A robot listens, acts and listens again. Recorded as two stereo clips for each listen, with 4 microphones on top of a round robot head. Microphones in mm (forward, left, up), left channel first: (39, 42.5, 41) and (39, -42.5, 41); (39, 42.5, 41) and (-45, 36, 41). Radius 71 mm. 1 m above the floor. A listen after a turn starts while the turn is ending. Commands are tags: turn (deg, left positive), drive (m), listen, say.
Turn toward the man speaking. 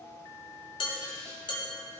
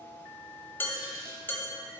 <listen/>
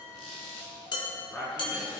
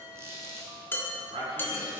<turn deg="165"/>
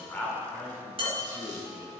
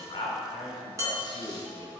<turn deg="-30"/>
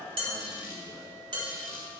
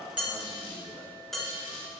<listen/>
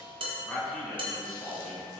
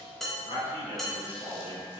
<say>Facing the man speaking, 2 to 4 m away.</say>